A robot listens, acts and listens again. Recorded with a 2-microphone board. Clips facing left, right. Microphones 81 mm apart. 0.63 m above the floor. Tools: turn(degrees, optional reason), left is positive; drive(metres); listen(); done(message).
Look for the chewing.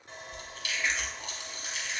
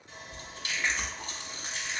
turn(degrees=-35, reason="The chewing: about 35° right or 145° right.")
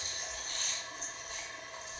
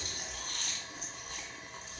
turn(degrees=-105, reason="So it is at 105° right.")
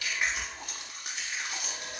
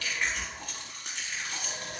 turn(degrees=15, reason="The chewing is now 15° left.")
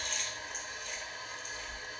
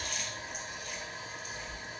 done("Found it: chewing, straight ahead.")